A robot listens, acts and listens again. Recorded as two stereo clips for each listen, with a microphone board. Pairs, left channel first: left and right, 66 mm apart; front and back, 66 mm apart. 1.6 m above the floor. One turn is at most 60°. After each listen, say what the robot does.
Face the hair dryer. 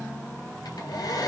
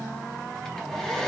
Turn 60° left.
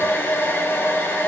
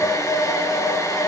Turn 30° left.
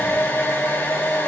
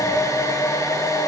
Turn 30° left.
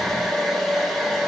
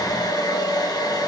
Found it: a hair dryer, straight ahead, 2 to 4 m away.